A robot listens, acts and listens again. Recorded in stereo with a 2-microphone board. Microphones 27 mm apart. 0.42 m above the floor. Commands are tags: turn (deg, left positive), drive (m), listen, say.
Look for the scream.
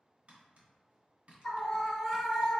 <turn deg="30"/>
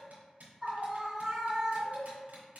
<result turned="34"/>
<turn deg="-25"/>
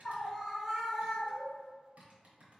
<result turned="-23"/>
<say>Found it: a scream, straight ahead, 1 to 2 m away.</say>